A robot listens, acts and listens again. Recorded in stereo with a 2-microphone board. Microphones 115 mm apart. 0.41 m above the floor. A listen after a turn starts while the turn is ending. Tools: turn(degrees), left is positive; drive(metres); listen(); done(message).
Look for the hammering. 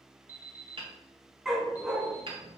turn(degrees=-50)
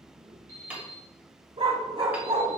turn(degrees=-15)
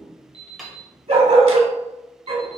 done("Found it: hammering, straight ahead, 1 to 2 m away.")